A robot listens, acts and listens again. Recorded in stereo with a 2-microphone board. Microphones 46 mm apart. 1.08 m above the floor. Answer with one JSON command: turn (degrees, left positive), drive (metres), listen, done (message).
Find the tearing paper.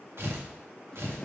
{"turn": -65}
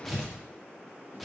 {"done": "Found it: tearing paper, straight ahead, 1 to 2 m away."}